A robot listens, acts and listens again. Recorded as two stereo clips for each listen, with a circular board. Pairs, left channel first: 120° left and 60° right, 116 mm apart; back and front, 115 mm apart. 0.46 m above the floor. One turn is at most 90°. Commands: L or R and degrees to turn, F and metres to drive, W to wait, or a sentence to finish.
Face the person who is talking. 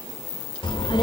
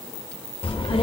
L90
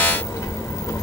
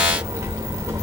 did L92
L60
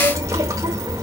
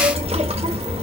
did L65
Found it: a child speaking, straight ahead, under 1 m away.